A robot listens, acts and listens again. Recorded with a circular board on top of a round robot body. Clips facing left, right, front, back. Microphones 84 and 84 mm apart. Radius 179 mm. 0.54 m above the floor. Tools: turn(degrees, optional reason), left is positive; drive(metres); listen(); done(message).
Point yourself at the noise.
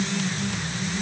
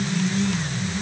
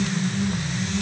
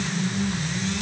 listen()
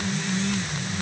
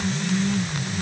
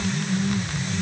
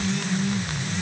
listen()
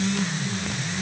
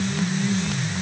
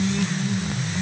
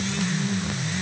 done("I can't make out anything to turn to.")